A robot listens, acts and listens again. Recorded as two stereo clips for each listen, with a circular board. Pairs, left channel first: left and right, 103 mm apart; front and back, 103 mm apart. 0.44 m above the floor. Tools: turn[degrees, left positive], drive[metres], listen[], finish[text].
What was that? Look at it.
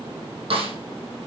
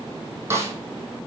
Thought: The snare drum: 115° right.
Action: turn[-115]
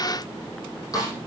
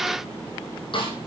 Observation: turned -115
Thought: The snare drum is now 35° left.
Action: turn[35]
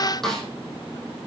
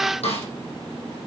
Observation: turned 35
Action: finish[Facing the snare drum.]